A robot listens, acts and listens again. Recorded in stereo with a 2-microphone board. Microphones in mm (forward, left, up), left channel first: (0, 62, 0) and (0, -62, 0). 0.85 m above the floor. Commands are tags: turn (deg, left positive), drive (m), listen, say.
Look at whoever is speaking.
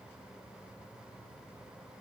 <listen/>
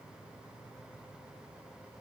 <listen/>
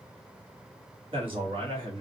<turn deg="-45"/>
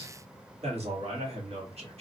<turn deg="-80"/>
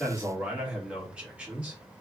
<turn deg="-10"/>
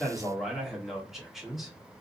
<say>Facing the man speaking.</say>